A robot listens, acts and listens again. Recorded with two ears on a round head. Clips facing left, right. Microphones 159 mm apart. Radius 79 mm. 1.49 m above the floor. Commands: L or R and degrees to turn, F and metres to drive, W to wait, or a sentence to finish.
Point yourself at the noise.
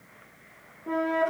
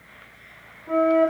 L90
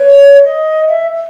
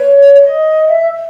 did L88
L10
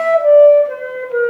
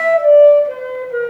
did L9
Found it: a flute, straight ahead.